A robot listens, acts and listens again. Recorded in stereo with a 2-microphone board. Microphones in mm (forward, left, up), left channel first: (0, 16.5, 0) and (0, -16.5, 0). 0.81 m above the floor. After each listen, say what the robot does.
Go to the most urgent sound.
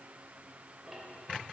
Keep listening.
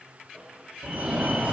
Turn 45° right.
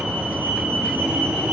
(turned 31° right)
Turn 95° right.
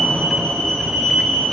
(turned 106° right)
Turn 10° left.
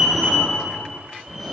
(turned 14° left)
Drive 1.0 m forward.
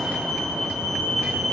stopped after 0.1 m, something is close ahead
Blocked. The fire alarm is further on, straight ahead.